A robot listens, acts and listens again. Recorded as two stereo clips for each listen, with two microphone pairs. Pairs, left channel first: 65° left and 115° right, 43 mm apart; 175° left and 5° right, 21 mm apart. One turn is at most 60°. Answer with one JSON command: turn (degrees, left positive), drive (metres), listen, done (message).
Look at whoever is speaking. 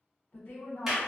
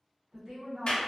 {"turn": 25}
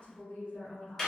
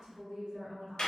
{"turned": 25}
{"done": "Facing the woman speaking, 1 to 2 m away."}